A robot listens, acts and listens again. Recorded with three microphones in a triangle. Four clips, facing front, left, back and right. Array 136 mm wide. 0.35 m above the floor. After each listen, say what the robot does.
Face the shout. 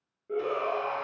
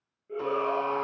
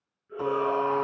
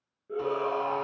Turn 10° right.
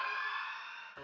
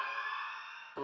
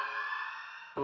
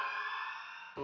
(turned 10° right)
Facing the shout, over 4 m away.